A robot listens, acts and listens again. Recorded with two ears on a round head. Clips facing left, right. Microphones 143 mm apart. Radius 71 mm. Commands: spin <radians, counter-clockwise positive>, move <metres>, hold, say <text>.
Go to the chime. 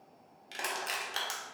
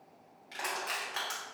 hold
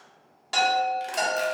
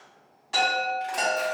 spin 1.31
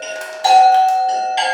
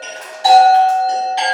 spin 0.44
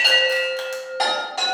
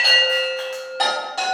move 1.0
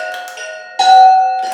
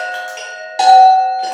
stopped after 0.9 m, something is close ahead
say I am next to the chime.